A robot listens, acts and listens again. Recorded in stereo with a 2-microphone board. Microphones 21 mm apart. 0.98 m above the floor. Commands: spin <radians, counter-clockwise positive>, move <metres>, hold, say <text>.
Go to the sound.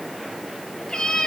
spin 0.87
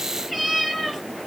move 1.0
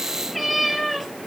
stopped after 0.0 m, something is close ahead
say Blocked. The cat meowing is further on, straight ahead.